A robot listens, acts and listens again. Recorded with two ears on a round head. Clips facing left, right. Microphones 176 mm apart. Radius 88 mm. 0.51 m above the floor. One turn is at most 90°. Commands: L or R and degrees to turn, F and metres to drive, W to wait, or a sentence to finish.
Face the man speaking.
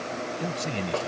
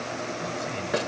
L60
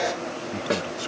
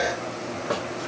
W
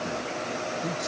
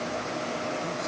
L40
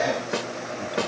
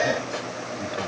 W
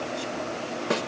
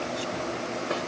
W
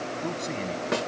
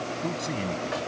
Found it: a man speaking, straight ahead.